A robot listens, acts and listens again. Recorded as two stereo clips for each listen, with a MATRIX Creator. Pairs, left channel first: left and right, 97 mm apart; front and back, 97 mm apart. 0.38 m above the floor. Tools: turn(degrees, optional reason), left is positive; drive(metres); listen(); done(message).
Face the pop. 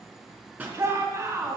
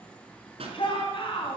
turn(degrees=-160, reason="The pop: 160° right.")
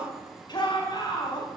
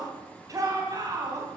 done("I heard a pop from this way, but can't make it out now.")